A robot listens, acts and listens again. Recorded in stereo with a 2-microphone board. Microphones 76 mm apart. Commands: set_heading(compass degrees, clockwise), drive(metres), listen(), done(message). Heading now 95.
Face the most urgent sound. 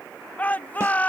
set_heading(75)
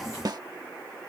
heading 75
listen()
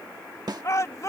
set_heading(295)
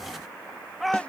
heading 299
done("Facing the shout.")